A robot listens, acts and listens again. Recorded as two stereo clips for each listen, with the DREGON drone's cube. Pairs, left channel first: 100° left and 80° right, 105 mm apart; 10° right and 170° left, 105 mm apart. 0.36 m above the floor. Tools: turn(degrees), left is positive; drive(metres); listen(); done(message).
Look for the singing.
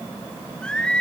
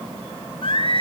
turn(degrees=20)
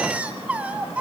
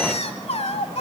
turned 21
done("Found it: singing, straight ahead.")